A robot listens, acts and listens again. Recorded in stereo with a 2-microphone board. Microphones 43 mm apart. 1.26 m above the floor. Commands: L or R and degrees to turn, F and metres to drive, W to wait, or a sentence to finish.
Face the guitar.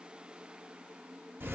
W
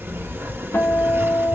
L70
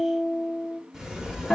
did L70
L20
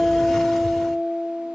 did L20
Found it: a guitar, straight ahead, 1 to 2 m away.